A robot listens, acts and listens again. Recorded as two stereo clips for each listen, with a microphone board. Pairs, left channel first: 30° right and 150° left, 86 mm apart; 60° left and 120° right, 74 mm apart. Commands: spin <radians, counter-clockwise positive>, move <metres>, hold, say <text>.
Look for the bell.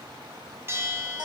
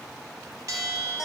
spin -2.71
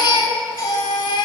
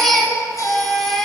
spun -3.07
spin 0.35
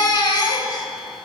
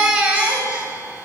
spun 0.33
hold
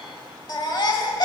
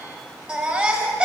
say Facing where the bell came from. I can't hear it now.